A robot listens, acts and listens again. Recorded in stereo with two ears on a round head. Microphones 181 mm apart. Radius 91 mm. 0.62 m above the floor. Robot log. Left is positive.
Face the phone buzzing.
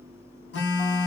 note: The phone buzzing: about 60° left or 120° left.
cmd yaw +60
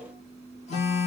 note: So it is at 40° left.
cmd yaw +40
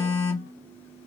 note: The phone buzzing is now 15° left.
cmd yaw +15
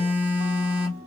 end: Found it: a phone buzzing, straight ahead.